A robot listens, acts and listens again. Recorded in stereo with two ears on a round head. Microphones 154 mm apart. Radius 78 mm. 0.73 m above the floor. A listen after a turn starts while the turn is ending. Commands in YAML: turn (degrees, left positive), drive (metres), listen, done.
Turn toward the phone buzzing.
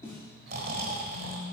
turn: 90
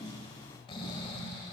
listen: true
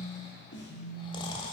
done: "Facing the phone buzzing."